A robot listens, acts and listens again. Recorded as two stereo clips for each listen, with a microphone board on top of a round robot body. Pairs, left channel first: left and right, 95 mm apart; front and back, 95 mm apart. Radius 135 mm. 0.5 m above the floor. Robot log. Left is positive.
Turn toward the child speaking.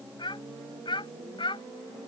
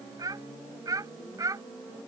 note: The child speaking: 125° left.
cmd yaw +125
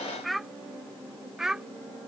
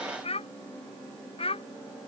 end: Found it: a child speaking, straight ahead.